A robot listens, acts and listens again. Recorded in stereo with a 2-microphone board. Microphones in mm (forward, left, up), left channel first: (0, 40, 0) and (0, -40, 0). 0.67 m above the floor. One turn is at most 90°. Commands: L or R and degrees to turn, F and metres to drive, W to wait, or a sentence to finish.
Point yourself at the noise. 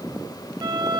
R70
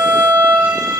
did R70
R35
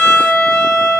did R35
Found it: a violin, straight ahead, over 4 m away.